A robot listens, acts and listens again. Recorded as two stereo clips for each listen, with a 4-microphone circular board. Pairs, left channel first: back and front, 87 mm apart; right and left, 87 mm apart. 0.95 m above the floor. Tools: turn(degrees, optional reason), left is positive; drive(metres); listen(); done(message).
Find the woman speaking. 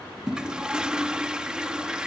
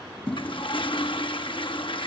listen()
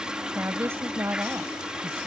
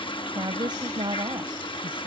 turn(degrees=65, reason="The woman speaking: 65° left.")
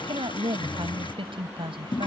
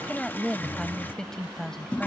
done("Facing the woman speaking.")